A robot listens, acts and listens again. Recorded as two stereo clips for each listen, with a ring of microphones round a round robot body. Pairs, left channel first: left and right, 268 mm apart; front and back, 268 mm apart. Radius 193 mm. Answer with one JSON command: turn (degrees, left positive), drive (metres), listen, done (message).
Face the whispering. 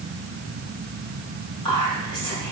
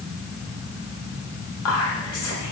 {"turn": 15}
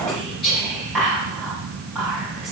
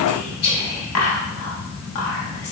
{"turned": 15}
{"done": "Found it: whispering, straight ahead, 1 to 2 m away."}